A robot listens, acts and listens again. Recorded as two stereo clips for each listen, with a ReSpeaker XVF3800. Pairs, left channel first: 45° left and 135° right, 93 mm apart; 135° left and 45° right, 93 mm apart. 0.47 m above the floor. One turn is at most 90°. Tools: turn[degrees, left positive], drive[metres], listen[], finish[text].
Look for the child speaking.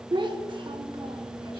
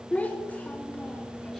Thought: The child speaking: 155° right.
Action: turn[-90]
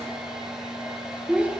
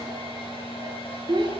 Thought: The child speaking is now 60° right.
Action: turn[-60]
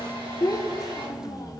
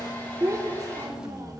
Action: finish[Facing the child speaking.]